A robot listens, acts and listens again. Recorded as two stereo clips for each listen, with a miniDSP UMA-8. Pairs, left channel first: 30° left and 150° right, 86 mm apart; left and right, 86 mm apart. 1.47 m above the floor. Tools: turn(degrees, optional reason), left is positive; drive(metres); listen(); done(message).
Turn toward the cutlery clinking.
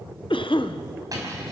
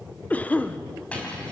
turn(degrees=165, reason="The cutlery clinking: 165° left.")
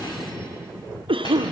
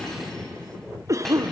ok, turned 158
listen()
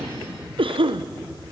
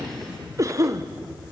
listen()
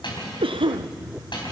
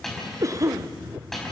done("Found it: cutlery clinking, straight ahead, over 4 m away.")